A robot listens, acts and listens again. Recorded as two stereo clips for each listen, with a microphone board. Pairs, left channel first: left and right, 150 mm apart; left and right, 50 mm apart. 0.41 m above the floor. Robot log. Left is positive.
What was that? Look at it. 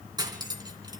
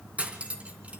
note: The cutlery clinking: about 30° right or 150° right.
cmd yaw -30
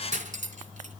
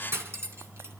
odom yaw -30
note: So it is at 115° right.
cmd yaw -115
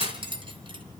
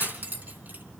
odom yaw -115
note: The cutlery clinking is now 40° right.
cmd yaw -40
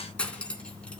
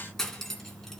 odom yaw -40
note: The cutlery clinking is now 10° left.
cmd yaw +10
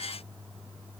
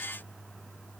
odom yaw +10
cmd idle
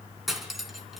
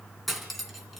end: Facing the cutlery clinking, 2 to 4 m away.